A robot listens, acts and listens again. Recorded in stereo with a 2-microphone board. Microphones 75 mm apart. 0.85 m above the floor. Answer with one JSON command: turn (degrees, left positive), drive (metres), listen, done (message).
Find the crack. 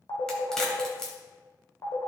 {"turn": 30}
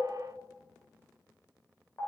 {"listen": true}
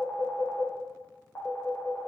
{"done": "I heard a crack, but can't make it out now. It was about 20° right or 140° left."}